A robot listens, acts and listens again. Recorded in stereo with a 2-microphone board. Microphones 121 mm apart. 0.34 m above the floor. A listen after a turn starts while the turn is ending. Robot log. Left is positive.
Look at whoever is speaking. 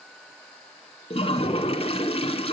cmd idle
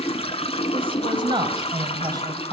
note: The woman speaking: about 30° right or 150° right.
cmd yaw -30
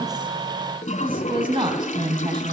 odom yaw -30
note: The woman speaking: about 40° right or 140° right.
cmd yaw -40
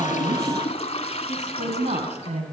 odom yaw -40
note: So it is at 115° right.
cmd yaw -115
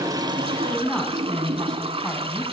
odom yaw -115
end: Found it: a woman speaking, straight ahead, 2 to 4 m away.